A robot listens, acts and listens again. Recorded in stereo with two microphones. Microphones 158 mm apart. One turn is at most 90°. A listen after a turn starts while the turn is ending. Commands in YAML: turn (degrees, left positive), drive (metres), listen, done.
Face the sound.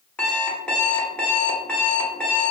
turn: 30
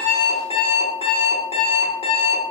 turn: 90
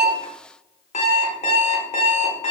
turn: 50
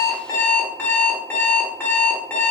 turn: 10
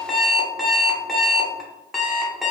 done: "Found it: an alarm clock, straight ahead."